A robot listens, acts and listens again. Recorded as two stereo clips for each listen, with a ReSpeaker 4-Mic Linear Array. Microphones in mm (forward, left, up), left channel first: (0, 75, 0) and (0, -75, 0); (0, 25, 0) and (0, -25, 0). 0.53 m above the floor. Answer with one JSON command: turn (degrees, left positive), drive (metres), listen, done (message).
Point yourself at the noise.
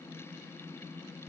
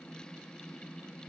{"listen": true}
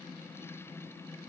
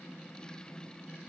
{"listen": true}
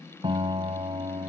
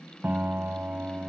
{"turn": -35}
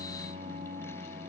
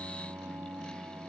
{"turn": -110}
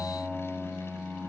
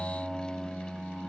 {"done": "Found it: a piano, straight ahead."}